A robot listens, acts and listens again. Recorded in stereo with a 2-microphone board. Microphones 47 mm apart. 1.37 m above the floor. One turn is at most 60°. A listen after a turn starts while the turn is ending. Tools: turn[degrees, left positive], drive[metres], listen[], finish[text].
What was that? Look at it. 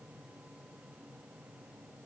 Action: listen[]
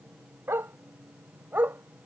Thought: The dog barking: about 50° right or 130° right.
Action: turn[-50]
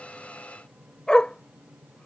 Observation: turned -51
Thought: So it is at 20° left.
Action: turn[20]
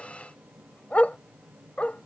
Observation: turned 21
Thought: The dog barking is now 35° left.
Action: turn[35]
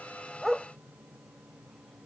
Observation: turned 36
Action: finish[Found it: a dog barking, straight ahead.]